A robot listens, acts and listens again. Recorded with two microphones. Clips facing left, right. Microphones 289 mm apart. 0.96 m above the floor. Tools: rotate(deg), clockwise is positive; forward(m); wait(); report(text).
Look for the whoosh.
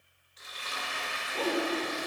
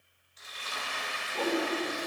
rotate(-30)
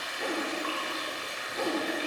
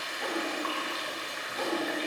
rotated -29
rotate(-145)
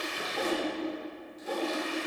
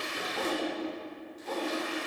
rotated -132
rotate(-15)
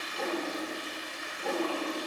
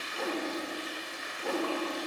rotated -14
report("Found it: a whoosh, straight ahead.")